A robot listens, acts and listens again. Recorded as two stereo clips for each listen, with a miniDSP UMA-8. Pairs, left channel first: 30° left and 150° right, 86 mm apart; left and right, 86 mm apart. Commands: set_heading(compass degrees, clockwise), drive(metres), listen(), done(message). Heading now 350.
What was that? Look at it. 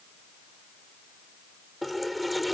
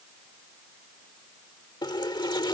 set_heading(230)
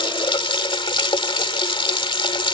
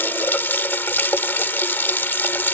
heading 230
set_heading(205)
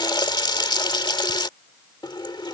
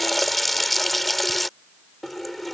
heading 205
done("Facing the running tap.")